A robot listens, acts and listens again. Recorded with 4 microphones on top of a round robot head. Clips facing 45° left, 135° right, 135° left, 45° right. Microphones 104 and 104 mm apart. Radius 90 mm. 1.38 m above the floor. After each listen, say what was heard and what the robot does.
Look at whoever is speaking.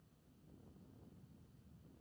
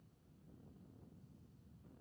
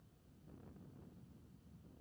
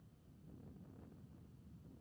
Keep listening.
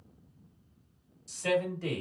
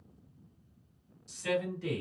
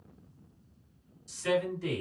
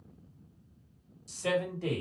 Facing the man speaking, 1 to 2 m away.